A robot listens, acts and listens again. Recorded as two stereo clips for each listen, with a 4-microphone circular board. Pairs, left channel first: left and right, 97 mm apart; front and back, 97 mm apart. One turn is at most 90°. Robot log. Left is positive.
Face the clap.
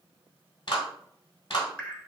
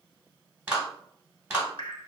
note: The clap: 110° left.
cmd yaw +90
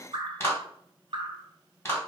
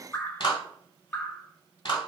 note: The clap is now 25° left.
cmd yaw +25
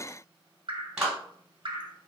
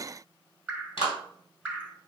note: The clap is now 15° right.
cmd yaw -15
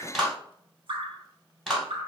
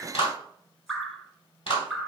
end: Found it: a clap, straight ahead.